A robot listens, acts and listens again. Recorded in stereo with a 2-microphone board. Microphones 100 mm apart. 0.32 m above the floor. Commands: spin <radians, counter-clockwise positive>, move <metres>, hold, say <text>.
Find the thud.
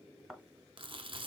spin 0.52
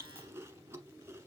hold
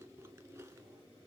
say I heard a thud, but can't make it out now. It was about 30° right or 150° left.